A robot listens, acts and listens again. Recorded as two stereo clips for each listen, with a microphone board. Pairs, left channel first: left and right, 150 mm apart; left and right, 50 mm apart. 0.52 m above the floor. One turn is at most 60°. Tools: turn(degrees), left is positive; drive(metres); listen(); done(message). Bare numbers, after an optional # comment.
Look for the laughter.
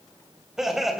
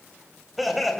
turn(30)
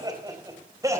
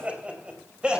# So it is at 20° right.
turn(-20)
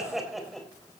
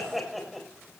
done("Found it: laughter, straight ahead, 2 to 4 m away.")